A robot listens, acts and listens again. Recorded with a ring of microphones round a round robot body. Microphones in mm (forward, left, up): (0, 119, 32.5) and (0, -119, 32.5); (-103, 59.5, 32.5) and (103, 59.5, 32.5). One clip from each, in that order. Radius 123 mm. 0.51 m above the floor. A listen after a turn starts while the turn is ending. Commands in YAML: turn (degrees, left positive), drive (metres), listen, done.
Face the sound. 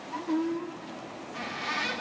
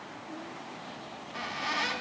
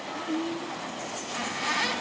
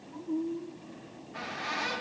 turn: -165
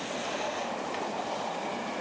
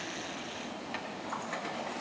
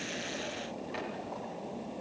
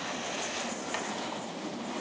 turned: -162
listen: true
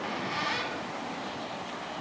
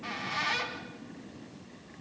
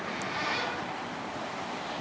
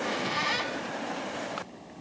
done: "Facing the squeak, 2 to 4 m away."